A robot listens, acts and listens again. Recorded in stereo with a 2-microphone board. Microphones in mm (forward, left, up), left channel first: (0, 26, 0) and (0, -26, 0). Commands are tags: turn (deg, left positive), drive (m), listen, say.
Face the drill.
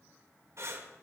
<listen/>
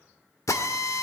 <turn deg="75"/>
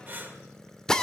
<turn deg="10"/>
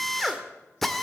<say>Facing the drill.</say>